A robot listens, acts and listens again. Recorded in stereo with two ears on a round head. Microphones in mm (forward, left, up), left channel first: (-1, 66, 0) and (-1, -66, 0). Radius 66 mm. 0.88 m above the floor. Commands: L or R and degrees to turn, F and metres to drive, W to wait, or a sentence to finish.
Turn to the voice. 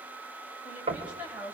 R30
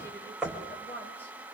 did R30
L15
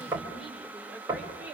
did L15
R10
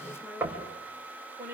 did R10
R20
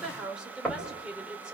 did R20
Found it: a woman speaking, straight ahead.